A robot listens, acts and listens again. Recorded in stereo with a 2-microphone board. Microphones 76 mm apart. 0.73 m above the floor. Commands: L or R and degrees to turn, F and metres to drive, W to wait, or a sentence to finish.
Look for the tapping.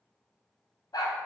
W
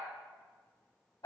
W
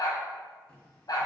L15
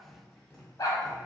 Found it: tapping, straight ahead, 1 to 2 m away.